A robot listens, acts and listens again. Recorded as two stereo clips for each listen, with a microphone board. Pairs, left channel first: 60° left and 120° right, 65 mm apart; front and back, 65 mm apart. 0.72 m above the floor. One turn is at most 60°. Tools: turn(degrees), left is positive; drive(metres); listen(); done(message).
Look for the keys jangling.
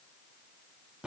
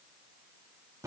listen()
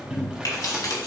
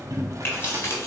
turn(degrees=45)
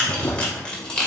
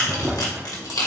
turn(degrees=-15)
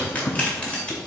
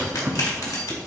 turn(degrees=-15)
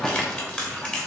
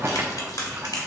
turn(degrees=-15)
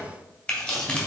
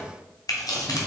turn(degrees=-10)
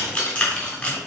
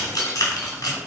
done("Found it: keys jangling, straight ahead.")